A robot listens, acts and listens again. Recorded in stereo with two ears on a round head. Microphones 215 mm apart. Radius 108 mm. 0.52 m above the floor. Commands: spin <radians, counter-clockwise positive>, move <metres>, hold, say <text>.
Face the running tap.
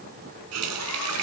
spin -1.22
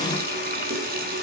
spin -0.70
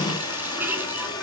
spin -0.17
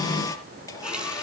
hold
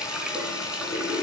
say Facing the running tap.